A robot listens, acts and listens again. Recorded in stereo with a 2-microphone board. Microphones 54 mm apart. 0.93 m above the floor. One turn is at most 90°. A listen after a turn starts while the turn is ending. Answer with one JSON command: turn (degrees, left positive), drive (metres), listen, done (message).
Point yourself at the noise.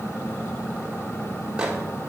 {"turn": -15}
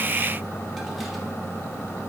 {"listen": true}
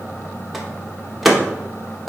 {"done": "Found it: a microwave, straight ahead, under 1 m away."}